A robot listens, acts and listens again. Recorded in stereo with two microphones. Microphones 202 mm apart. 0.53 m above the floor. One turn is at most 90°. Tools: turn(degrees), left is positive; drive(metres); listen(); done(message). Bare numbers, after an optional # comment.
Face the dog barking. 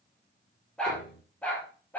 turn(30)
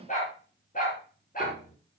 # So it is at 135° left.
turn(90)
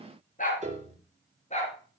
# The dog barking is now 35° left.
turn(35)
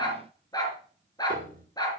# The dog barking is now 20° left.
turn(20)
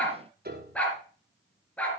done("Found it: a dog barking, straight ahead, 2 to 4 m away.")